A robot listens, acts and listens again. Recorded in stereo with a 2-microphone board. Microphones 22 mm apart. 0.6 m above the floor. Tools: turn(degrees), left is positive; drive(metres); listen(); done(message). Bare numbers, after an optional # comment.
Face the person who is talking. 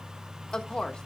# The woman speaking: about 45° left or 135° left.
turn(45)
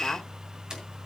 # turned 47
# So it is at 80° left.
turn(80)
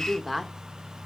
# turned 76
done("Found it: a woman speaking, straight ahead, 1 to 2 m away.")